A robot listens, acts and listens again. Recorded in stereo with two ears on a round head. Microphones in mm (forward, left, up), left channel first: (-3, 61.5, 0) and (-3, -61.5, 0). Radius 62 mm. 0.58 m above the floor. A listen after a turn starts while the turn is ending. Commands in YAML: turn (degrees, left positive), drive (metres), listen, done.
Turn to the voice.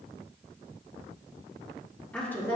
turn: 15
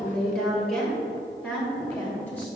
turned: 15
turn: 30
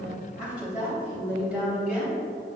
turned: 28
done: "Found it: a woman speaking, straight ahead, 2 to 4 m away."